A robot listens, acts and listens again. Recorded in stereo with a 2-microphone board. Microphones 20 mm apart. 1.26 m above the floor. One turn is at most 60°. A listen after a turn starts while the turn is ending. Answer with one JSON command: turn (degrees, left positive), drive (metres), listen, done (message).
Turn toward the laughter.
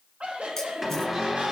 {"turn": -60}
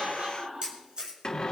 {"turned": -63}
{"turn": -40}
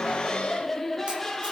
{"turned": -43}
{"turn": 15}
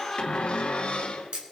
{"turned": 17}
{"done": "Facing the laughter."}